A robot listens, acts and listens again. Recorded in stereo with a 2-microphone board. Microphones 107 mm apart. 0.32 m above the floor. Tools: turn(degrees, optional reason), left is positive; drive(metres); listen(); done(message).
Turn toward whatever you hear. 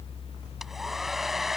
turn(degrees=30)
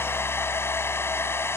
turn(degrees=155, reason="So it is at 155° left.")
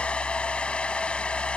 turn(degrees=10, reason="The hair dryer is now 10° left.")
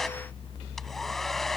listen()
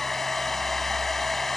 done("Facing the hair dryer.")